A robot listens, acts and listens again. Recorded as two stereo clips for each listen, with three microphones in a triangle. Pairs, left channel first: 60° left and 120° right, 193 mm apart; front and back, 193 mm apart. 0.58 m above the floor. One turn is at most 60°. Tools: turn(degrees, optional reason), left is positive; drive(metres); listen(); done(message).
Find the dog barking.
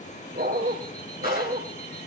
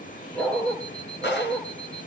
turn(degrees=-60, reason="The dog barking: 85° right.")
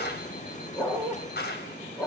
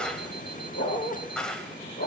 turn(degrees=-20, reason="The dog barking is now 20° right.")
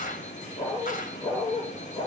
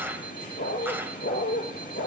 turn(degrees=-10, reason="The dog barking is now 10° right.")
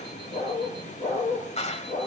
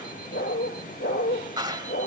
done("Facing the dog barking.")